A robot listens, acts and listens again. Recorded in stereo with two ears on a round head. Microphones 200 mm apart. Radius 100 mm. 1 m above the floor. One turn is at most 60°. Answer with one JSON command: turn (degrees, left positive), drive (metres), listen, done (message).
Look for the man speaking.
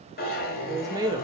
{"turn": -20}
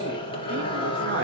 {"listen": true}
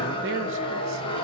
{"listen": true}
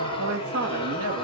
{"turn": -60}
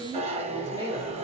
{"turn": -20}
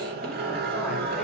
{"listen": true}
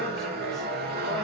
{"listen": true}
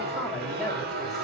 {"done": "Facing the man speaking."}